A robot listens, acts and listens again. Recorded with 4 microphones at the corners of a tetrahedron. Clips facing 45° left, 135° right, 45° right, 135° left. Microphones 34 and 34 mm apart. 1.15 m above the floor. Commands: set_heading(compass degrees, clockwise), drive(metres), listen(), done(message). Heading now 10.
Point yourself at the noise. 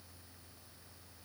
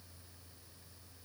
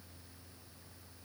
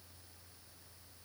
listen()
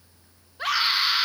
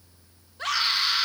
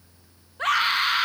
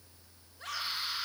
set_heading(40)
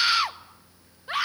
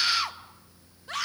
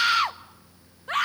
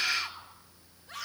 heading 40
set_heading(60)
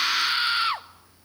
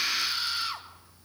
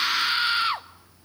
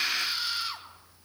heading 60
done("Found it: a scream, straight ahead.")